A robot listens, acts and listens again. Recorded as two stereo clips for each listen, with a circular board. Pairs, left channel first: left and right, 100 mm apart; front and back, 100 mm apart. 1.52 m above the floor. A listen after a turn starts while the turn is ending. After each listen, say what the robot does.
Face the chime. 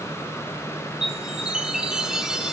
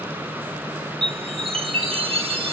Turn 170° right.
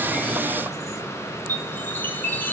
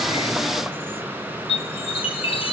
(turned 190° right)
Turn 20° left.
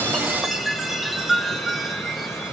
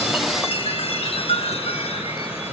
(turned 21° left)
Facing the chime, 1 to 2 m away.